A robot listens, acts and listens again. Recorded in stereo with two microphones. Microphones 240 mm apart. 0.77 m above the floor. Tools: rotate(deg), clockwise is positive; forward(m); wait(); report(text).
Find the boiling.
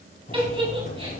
rotate(-35)
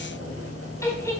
rotate(-110)
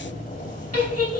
rotate(-35)
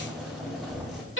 report("Facing the boiling, over 4 m away.")